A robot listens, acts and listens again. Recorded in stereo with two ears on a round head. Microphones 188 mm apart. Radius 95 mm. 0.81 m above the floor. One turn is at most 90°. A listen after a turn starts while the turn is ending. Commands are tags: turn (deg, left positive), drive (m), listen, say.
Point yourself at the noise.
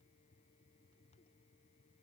<listen/>
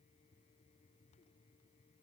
<listen/>
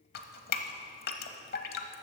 <turn deg="50"/>
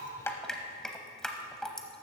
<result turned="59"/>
<say>Facing the dripping.</say>